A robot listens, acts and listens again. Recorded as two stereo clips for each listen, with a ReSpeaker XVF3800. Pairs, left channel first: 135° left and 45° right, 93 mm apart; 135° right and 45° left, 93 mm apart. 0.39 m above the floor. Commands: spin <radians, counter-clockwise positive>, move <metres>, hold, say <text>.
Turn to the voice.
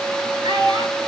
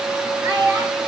spin -0.35
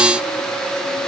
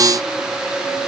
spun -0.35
hold
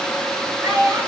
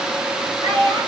say Facing the child speaking.